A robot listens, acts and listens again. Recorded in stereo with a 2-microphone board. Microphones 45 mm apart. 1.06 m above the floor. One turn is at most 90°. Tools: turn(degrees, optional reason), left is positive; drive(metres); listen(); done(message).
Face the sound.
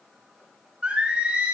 turn(degrees=-30, reason="The singing: about 30° right or 150° right.")
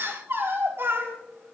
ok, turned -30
turn(degrees=-90, reason="So it is at 115° right.")
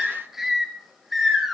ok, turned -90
done("Facing the singing, 2 to 4 m away.")